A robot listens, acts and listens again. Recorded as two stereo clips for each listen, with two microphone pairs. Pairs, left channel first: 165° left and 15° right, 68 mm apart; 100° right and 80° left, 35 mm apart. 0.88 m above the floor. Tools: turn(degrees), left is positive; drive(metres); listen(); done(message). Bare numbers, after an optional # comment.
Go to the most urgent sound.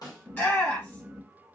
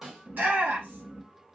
# The shout: 110° left.
turn(110)
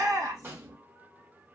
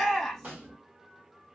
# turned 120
# The shout is now 10° right.
turn(-10)
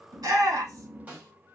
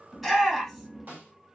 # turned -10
drive(1.0)
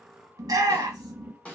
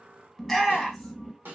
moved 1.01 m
# The shout is now 10° right.
turn(-10)
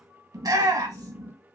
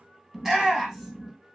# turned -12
drive(1.0)
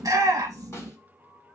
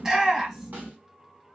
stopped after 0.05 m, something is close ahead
# The shout is now 15° left.
turn(15)
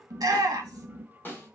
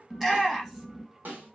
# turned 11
done("I am next to the shout.")